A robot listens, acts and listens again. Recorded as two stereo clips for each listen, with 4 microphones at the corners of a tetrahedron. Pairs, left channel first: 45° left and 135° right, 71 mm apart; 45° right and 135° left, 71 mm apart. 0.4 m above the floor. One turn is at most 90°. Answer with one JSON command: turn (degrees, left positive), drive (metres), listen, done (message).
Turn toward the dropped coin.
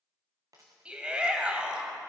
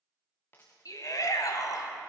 {"turn": -90}
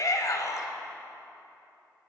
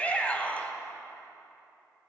{"turn": -15}
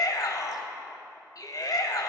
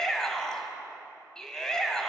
{"done": "I heard a dropped coin from this way, but can't make it out now."}